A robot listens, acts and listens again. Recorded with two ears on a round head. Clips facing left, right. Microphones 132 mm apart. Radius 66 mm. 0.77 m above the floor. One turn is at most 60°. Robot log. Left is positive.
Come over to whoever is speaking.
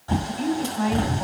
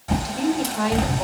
note: The woman speaking: about 50° right or 130° right.
cmd yaw -50
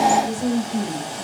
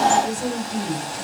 cmd fwd 1.0
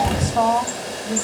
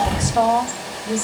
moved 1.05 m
cmd fwd 1.0
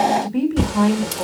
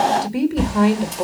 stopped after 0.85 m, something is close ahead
note: The woman speaking is now 15° right.
cmd yaw -15
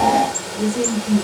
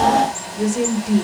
end: Arrived at the woman speaking, straight ahead.